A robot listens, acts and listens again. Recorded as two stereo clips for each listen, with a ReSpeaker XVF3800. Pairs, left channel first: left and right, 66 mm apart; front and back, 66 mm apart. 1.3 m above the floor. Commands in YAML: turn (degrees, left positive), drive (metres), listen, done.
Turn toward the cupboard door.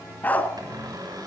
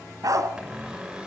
turn: -105
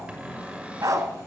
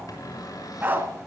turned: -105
turn: -20
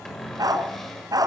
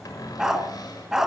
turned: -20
done: "Found it: a cupboard door, straight ahead, over 4 m away."